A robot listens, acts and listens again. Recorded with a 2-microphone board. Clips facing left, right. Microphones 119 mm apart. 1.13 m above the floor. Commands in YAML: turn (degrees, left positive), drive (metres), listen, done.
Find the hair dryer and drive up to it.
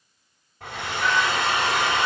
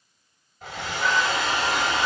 turn: 65
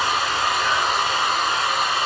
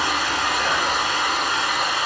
turn: 40
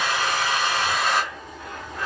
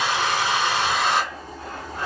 turn: -20
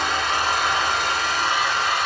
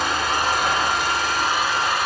drive: 1.0
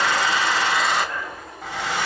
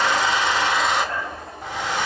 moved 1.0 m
drive: 1.0
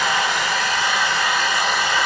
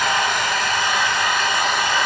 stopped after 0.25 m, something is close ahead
done: "Arrived at the hair dryer, straight ahead."